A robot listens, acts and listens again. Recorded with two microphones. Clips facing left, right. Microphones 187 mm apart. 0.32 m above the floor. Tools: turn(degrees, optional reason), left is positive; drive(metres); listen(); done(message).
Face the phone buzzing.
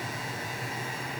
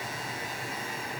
listen()
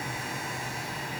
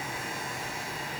listen()
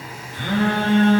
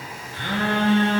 turn(degrees=20, reason="The phone buzzing: about 20° left or 160° left.")
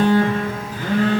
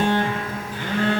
turn(degrees=140, reason="So it is at 140° left.")
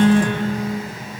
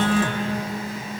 turn(degrees=60, reason="The phone buzzing is now 60° left.")
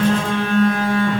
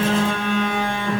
done("Facing the phone buzzing.")